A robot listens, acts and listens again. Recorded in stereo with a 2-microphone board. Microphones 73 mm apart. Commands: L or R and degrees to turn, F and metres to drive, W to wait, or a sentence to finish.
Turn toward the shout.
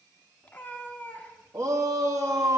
R45
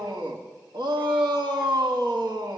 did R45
R85
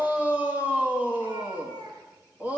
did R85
R25
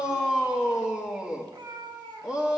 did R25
R10
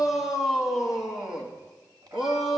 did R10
Facing the shout.